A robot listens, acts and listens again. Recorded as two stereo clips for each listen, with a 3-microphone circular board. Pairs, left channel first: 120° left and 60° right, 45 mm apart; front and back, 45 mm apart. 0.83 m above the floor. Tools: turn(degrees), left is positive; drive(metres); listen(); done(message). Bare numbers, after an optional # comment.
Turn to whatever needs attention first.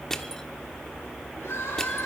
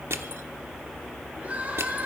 # The crying: 125° left.
turn(125)
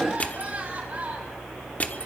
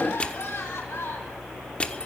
# The crying is now 10° right.
turn(-10)
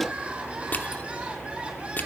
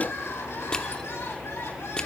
done("Facing the crying, 2 to 4 m away.")